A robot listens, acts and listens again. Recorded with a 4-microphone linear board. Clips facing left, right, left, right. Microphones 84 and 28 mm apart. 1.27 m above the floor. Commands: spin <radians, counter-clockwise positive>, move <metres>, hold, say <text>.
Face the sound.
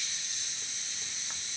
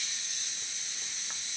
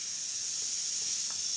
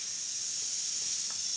hold
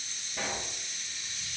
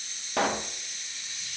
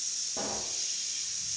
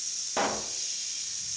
spin -1.31
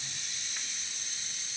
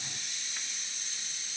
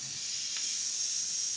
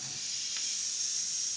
hold
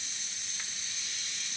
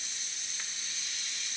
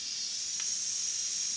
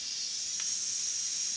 say I heard a pop, but can't make it out now. It was about straight ahead or 30° right.